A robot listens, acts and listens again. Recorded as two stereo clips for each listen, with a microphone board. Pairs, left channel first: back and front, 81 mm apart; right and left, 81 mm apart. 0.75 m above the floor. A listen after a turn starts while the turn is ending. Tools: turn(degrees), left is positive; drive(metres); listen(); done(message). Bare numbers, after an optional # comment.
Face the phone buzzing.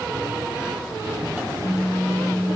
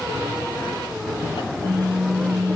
# The phone buzzing: 175° left.
turn(175)
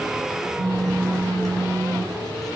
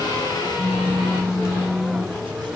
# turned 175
# The phone buzzing is now 10° right.
turn(-10)
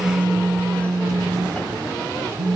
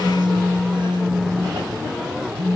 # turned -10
done("Found it: a phone buzzing, straight ahead, 2 to 4 m away.")